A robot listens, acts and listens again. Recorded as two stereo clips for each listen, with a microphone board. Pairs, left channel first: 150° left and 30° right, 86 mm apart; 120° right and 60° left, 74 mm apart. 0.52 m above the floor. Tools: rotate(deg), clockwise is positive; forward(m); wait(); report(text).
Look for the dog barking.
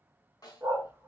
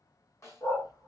rotate(90)
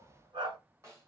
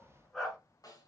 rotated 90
rotate(35)
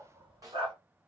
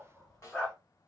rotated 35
rotate(40)
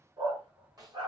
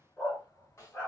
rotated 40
rotate(55)
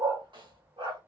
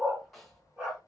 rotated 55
rotate(20)
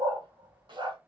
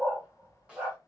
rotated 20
report("Found it: a dog barking, straight ahead, 2 to 4 m away.")